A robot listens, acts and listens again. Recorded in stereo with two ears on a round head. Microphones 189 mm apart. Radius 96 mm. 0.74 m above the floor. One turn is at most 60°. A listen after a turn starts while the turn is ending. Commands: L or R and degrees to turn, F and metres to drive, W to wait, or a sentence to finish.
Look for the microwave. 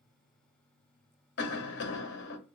W
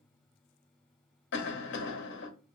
W
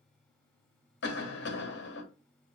I can't make out a microwave, only a cough.